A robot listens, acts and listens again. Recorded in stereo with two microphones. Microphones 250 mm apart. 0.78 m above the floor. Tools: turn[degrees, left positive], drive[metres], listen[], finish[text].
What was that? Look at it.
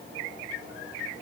Action: listen[]
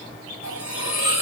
Action: turn[90]
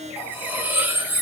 Action: finish[Facing the cutlery clinking.]